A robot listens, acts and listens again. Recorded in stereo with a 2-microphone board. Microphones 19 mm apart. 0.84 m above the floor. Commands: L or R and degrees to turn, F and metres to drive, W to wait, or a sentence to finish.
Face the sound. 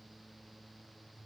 W
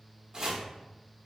R40
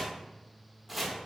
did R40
Facing the chopping, under 1 m away.